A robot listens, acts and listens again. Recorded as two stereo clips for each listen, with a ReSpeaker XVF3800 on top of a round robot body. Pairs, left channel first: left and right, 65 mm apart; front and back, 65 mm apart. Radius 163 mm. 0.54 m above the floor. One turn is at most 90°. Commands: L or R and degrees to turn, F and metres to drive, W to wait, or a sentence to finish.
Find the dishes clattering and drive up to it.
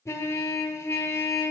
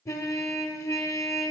W
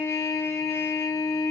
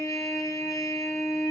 W
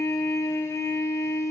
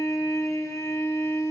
I can't make out dishes clattering to turn to.